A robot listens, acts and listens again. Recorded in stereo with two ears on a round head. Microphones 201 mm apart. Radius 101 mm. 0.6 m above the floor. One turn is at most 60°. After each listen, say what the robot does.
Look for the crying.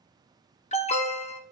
Keep listening.
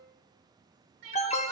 Turn 60° right.
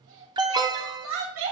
Turn 60° right.
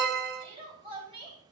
Turn 25° right.
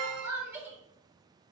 Turn 10° right.
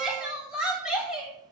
Facing the crying.